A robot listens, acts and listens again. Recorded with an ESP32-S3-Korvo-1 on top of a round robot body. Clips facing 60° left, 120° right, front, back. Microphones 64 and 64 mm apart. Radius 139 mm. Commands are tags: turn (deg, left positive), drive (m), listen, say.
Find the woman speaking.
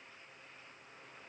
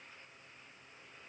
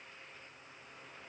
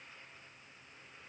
<listen/>
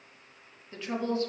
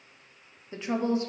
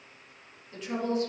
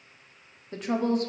<turn deg="175"/>
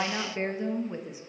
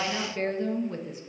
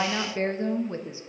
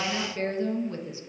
<turn deg="-15"/>
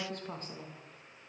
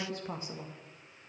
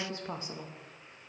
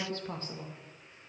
<turn deg="-65"/>
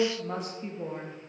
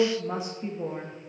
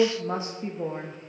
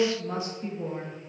<turn deg="-35"/>
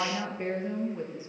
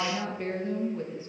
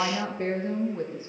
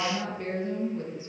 <say>Found it: a woman speaking, straight ahead.</say>